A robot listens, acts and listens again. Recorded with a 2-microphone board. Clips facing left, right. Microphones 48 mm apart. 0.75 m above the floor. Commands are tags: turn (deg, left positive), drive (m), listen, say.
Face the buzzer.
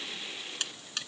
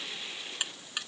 <turn deg="-30"/>
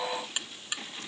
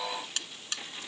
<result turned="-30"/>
<turn deg="15"/>
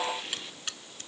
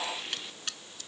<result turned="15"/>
<say>Facing the buzzer.</say>